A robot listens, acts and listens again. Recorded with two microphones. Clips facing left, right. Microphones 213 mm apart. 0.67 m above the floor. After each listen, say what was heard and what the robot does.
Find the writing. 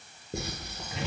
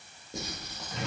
The writing: about 60° left or 120° left. Turn 60° left.
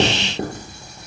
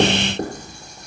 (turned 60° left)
Found it: writing, straight ahead.